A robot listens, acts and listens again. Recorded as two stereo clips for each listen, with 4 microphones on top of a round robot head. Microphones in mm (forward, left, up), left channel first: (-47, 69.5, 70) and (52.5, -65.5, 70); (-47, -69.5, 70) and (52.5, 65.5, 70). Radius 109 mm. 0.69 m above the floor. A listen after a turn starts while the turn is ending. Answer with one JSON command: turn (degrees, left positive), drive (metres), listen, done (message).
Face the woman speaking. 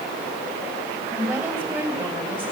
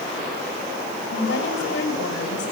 {"turn": -135}
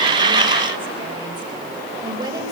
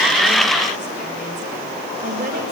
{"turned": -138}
{"turn": 15}
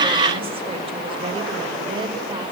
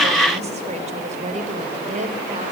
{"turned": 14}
{"turn": 10}
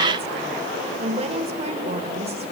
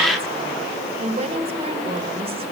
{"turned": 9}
{"done": "Facing the woman speaking."}